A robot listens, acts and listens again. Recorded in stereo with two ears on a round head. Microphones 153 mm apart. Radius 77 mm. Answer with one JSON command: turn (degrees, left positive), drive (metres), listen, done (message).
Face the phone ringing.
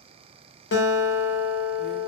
{"listen": true}
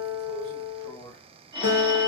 {"turn": -25}
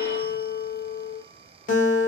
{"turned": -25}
{"listen": true}
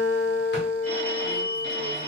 {"turn": -125}
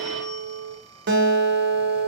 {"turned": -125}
{"listen": true}
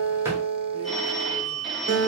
{"done": "Facing the phone ringing."}